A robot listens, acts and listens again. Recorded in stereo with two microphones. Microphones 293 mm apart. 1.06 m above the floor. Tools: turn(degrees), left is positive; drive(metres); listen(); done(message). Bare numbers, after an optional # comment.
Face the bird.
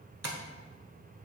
listen()
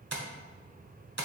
listen()
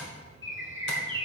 # The bird: about 45° right or 135° right.
turn(-45)
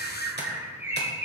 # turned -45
# So it is at 10° right.
turn(-10)
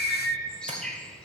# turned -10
done("Facing the bird, 1 to 2 m away.")